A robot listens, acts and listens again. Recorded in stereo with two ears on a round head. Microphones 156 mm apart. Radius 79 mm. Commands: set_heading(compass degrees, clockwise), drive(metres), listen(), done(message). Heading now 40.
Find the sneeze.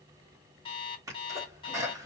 set_heading(60)
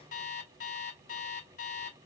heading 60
listen()
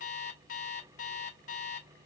done("I heard a sneeze, but can't make it out now. It was about straight ahead or 140° right.")